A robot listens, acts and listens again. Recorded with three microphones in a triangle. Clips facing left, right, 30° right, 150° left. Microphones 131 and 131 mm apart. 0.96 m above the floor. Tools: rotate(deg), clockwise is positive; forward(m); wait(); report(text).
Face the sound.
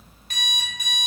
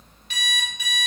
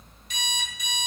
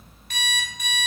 rotate(-130)
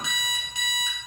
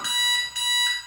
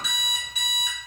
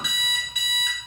rotate(-20)
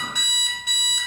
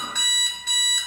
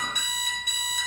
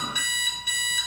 rotate(-10)
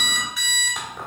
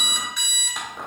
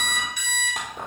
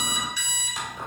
report("Facing the alarm clock, 1 to 2 m away.")